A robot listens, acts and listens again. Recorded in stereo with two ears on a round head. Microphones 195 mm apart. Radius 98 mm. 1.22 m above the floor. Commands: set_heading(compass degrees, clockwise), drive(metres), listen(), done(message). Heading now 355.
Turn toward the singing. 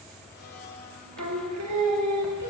set_heading(85)
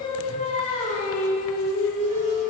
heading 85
set_heading(35)
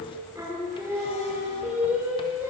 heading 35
set_heading(45)
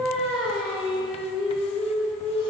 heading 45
done("Facing the singing.")